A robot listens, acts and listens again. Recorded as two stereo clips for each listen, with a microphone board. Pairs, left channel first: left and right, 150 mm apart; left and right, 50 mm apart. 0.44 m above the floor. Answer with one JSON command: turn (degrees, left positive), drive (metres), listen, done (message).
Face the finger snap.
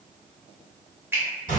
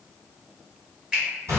{"turn": -30}
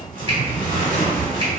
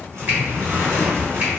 {"listen": true}
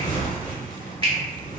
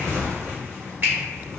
{"turn": -135}
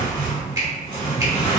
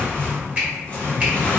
{"turn": -30}
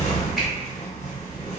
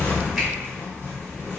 {"listen": true}
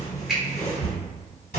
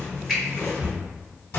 {"done": "Found it: a finger snap, straight ahead."}